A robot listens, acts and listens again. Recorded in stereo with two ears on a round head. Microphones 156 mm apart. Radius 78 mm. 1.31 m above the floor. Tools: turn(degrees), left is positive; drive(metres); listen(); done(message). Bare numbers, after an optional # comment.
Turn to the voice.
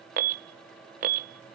listen()
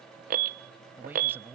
turn(-30)
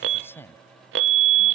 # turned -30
# So it is at 15° left.
turn(15)
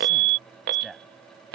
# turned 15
done("Facing the man speaking.")